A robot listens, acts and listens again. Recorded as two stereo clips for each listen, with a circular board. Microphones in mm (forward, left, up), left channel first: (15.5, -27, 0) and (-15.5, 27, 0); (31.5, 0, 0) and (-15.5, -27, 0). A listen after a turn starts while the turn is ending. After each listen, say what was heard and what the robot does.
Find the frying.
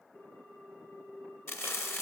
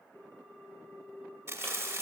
The frying: 105° right. Turn 105° right.
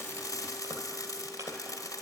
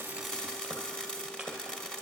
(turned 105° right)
The frying is now 45° right. Turn 45° right.
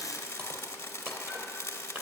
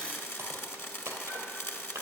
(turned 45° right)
The frying is now 10° right. Turn 10° right.
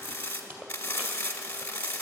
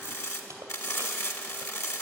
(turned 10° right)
Found it: frying, straight ahead, 1 to 2 m away.